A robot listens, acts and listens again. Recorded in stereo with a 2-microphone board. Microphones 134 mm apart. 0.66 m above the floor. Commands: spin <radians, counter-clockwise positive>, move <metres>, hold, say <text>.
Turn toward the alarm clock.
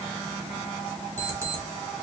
spin -0.35
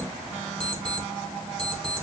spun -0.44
say Found it: an alarm clock, straight ahead.